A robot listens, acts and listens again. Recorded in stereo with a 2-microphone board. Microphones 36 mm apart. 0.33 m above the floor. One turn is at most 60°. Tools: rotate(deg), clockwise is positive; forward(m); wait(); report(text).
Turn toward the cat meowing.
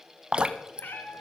rotate(-60)
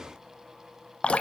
rotate(-30)
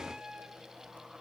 rotate(25)
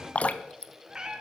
rotate(25)
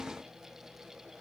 wait()
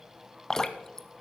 wait()
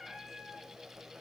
report("Facing the cat meowing.")